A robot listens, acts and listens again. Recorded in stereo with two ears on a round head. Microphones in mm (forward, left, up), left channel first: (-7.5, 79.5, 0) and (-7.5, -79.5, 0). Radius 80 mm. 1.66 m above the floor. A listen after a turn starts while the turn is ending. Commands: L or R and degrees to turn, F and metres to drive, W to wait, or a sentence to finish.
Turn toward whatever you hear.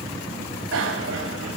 W
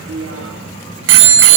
R90
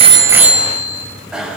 Facing the bicycle bell.